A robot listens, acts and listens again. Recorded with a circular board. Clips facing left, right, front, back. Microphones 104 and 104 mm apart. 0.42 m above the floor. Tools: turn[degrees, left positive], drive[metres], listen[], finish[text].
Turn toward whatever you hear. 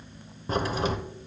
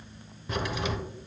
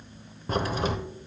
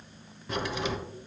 Thought: The crack: 45° left.
Action: turn[45]
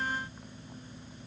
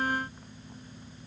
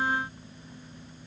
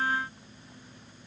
Action: finish[I heard a crack from this way, but can't make it out now.]